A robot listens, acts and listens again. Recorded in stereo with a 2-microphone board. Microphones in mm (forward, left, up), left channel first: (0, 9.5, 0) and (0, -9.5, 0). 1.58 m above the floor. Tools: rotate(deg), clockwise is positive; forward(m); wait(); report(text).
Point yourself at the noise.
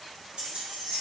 rotate(60)
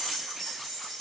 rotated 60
rotate(-10)
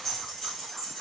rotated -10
rotate(-15)
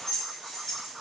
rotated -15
rotate(-10)
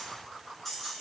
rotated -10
report("Facing the keys jangling.")